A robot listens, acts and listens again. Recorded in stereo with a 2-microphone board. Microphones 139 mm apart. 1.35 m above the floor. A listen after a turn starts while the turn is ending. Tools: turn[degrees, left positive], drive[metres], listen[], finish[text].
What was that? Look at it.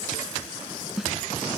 Action: turn[30]
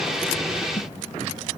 Action: listen[]
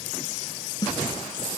Thought: So it is at 150° left.
Action: turn[150]
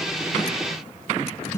Thought: The snare drum is now 20° left.
Action: turn[20]
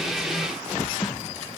Action: listen[]
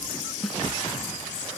Action: finish[Facing the snare drum.]